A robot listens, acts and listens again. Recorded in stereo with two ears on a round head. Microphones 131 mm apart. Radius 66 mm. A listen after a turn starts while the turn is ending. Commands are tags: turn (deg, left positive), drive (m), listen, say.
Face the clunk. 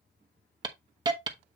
<listen/>
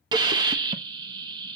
<listen/>
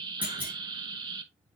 <turn deg="-30"/>
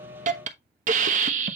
<listen/>
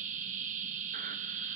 <say>I heard a clunk, but can't make it out now. It was about 20° left or 140° right.</say>